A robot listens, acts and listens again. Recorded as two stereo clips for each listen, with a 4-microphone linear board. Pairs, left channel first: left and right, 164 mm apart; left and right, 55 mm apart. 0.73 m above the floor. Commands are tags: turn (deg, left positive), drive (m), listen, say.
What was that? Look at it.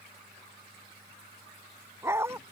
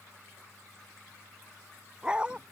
<turn deg="-30"/>
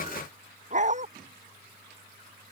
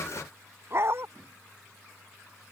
<turn deg="-135"/>
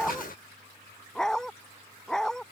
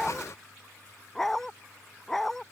<say>Facing the dog barking.</say>